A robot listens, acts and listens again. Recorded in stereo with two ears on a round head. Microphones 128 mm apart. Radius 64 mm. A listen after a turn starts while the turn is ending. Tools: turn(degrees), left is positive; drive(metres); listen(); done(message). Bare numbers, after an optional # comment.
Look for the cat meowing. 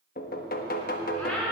turn(30)
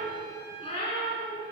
# So it is at 140° left.
turn(140)
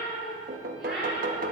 done("Facing the cat meowing, over 4 m away.")